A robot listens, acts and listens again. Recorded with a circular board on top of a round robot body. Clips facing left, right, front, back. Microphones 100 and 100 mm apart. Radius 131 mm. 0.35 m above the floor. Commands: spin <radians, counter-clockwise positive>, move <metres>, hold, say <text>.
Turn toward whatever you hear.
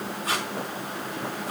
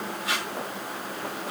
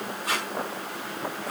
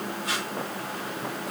spin 0.70
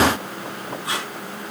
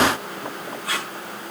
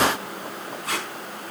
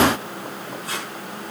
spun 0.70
spin 0.44
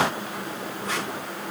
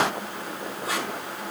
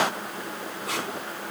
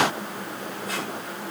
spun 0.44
spin -0.17
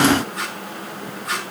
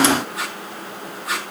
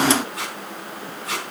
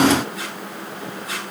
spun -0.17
say Found it: tape being pulled, straight ahead, over 4 m away.